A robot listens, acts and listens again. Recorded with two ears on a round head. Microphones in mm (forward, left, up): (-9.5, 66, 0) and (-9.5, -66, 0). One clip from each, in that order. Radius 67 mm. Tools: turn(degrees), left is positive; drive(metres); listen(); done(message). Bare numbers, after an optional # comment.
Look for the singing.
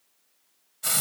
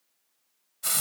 listen()
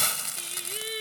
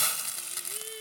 # The singing: about 40° left or 140° left.
turn(40)
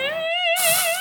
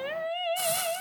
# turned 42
# So it is at 115° left.
turn(115)
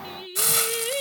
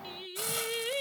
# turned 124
done("Found it: singing, straight ahead.")